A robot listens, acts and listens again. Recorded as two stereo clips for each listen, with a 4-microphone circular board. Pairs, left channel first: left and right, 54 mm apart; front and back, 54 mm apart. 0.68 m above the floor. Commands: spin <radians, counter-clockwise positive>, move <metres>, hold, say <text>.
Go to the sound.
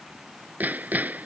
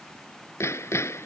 spin -0.61
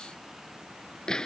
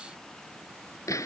spin 0.17
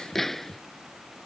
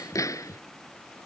move 1.0
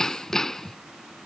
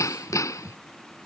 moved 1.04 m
move 1.0
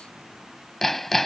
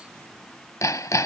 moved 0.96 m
move 1.0
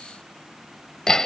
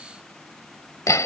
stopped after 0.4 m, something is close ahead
spin 0.17
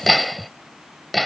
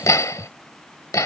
say I am next to the hammering.